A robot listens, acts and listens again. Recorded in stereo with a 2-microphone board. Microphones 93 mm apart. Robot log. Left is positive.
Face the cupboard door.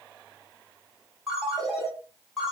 cmd idle
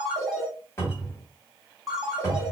note: The cupboard door: about 30° left or 150° left.
cmd yaw +30
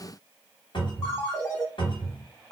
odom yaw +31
note: So it is at 120° left.
cmd yaw +120
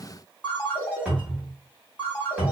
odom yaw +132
note: The cupboard door is now 10° right.
cmd yaw -10
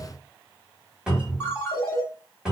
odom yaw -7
end: Found it: a cupboard door, straight ahead, 1 to 2 m away.